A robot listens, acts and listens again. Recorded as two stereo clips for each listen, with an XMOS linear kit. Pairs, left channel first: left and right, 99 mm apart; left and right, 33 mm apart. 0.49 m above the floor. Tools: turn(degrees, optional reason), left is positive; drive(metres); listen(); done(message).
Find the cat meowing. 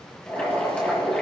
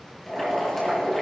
listen()
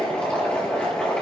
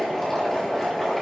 listen()
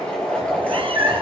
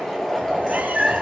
turn(degrees=-70, reason="The cat meowing: about 70° right or 110° right.")
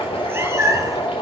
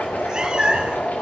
turn(degrees=-35, reason="So it is at 35° right.")
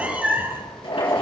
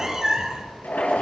turn(degrees=-20, reason="The cat meowing is now 20° right.")
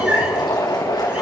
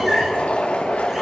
listen()
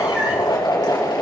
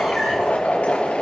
listen()
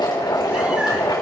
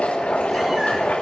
done("I heard a cat meowing from this way, but can't make it out now.")